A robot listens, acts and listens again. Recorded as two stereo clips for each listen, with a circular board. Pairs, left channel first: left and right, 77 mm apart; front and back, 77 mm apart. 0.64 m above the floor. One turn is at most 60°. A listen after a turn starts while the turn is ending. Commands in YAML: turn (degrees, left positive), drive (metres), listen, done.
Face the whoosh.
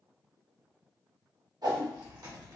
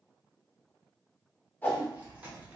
turn: -60
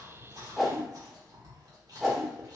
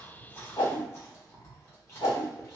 done: "Found it: a whoosh, straight ahead."